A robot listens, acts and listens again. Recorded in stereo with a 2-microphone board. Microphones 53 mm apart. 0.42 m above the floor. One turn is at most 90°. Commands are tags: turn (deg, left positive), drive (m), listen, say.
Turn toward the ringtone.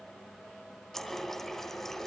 <listen/>
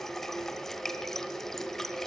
<listen/>
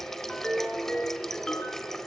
<turn deg="15"/>
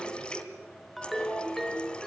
<say>Facing the ringtone, 2 to 4 m away.</say>